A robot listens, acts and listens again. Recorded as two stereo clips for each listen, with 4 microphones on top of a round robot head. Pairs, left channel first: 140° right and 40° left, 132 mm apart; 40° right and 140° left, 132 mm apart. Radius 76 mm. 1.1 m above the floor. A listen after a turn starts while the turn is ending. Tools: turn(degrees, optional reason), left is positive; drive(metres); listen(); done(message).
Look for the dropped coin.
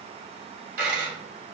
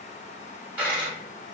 turn(degrees=65, reason="The dropped coin: 65° left.")
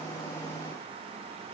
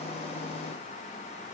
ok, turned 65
done("I heard a dropped coin from this way, but can't make it out now.")